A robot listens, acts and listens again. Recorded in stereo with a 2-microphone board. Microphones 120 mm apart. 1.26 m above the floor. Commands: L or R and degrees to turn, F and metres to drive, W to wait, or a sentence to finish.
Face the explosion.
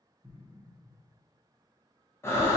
R35
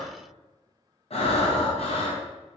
W
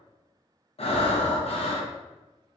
I heard an explosion, but can't make it out now. It was about straight ahead or 110° right.